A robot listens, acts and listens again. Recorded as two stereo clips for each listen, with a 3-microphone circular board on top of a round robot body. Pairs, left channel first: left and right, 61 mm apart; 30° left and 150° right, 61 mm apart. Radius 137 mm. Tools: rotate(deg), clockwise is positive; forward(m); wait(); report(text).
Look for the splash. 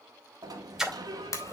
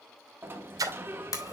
rotate(175)
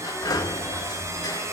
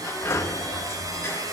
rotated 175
report("Facing where the splash came from. I can't hear it now.")